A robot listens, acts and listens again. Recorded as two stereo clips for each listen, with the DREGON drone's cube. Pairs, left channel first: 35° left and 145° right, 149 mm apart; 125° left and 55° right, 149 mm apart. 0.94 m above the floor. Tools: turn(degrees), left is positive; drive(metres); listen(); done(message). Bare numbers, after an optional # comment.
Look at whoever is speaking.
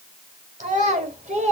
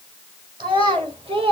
# The child speaking: 105° right.
turn(-105)
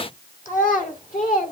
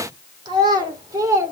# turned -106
# The child speaking is now 10° left.
turn(10)
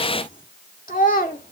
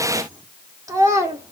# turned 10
# The child speaking is now 15° left.
turn(15)
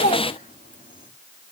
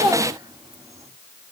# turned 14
done("Found it: a child speaking, straight ahead.")